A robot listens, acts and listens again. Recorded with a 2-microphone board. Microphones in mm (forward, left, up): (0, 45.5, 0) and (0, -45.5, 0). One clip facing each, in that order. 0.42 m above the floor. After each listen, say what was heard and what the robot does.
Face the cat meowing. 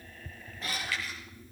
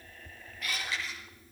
The cat meowing: about 30° left or 150° left. Turn 30° left.
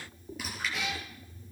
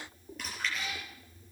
So it is at 100° left. Turn 100° left.
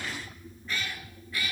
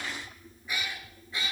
The cat meowing is now 25° right. Turn 25° right.
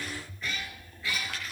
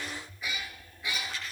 The cat meowing is now 20° right. Turn 20° right.
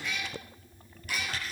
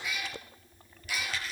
Facing the cat meowing.